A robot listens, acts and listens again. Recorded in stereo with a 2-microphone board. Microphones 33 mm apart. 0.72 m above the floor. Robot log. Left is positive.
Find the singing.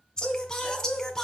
note: The singing: about 15° left or 165° left.
cmd yaw +15
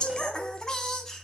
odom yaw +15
cmd yaw +30
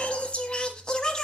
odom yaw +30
note: The singing: about 20° left or 160° left.
cmd yaw +20
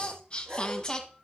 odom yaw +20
note: The singing: about 20° left or 160° left.
cmd yaw +20
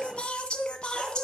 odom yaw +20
note: The singing: about 25° left or 155° left.
cmd yaw +25
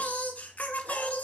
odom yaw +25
note: So it is at 135° left.
cmd yaw +135
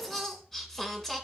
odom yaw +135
end: Found it: singing, straight ahead.